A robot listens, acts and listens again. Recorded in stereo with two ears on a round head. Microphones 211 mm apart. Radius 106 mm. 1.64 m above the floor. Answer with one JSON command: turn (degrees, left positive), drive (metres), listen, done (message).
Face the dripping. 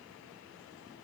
{"listen": true}
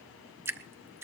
{"turn": -30}
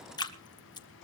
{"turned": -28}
{"turn": 20}
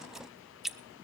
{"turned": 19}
{"done": "Found it: dripping, straight ahead."}